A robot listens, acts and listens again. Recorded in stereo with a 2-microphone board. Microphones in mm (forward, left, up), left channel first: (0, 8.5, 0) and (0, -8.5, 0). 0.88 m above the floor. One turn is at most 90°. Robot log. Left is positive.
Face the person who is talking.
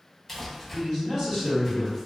note: The man speaking: about 45° right or 135° right.
cmd yaw -45
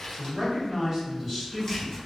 note: So it is at 10° right.
cmd yaw -10
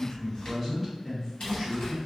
end: Facing the man speaking.